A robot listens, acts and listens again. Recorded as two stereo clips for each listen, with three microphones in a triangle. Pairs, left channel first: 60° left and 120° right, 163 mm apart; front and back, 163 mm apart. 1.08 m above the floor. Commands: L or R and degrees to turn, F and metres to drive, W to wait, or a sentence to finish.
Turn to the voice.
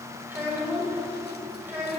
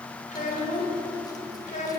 R40
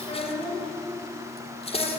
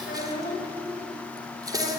Facing the child speaking.